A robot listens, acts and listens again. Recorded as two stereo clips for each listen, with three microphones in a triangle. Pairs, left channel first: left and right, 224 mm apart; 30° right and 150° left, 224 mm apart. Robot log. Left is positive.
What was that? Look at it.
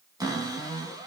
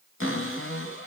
note: The cupboard door: 15° right.
cmd yaw -15
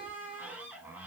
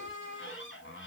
end: Found it: a cupboard door, straight ahead.